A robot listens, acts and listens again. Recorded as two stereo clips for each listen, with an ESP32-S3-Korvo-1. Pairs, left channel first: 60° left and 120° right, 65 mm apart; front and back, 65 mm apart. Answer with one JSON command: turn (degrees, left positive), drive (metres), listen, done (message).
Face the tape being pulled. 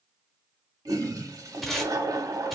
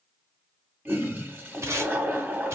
{"turn": 150}
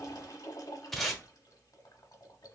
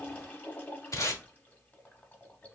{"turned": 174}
{"turn": -25}
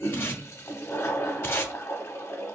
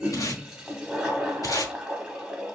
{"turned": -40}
{"turn": 15}
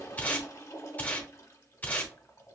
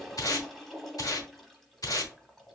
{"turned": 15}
{"done": "Found it: tape being pulled, straight ahead."}